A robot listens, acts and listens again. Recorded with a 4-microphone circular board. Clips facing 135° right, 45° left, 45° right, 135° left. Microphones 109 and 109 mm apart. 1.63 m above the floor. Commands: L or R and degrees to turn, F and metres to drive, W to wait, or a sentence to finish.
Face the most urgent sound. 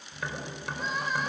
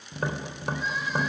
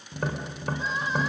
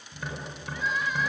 R100
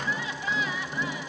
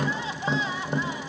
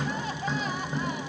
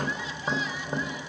R10
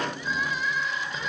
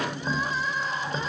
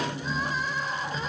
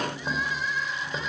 Found it: crying, straight ahead, 1 to 2 m away.